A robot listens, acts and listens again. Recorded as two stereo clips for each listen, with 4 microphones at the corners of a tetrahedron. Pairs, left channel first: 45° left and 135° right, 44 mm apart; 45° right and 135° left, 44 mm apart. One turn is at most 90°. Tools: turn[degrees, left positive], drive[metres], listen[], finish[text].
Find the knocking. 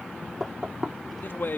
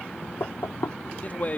Thought: The knocking: 60° right.
Action: turn[-60]
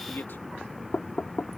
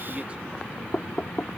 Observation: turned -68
Thought: The knocking is now 10° left.
Action: turn[10]
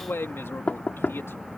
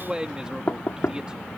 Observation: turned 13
Action: finish[Found it: knocking, straight ahead.]